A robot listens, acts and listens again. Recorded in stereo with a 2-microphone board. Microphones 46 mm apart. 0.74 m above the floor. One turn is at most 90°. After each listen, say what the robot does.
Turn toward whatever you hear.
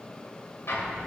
Turn 90° left.
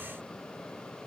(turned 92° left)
Facing where the explosion came from. I can't hear it now.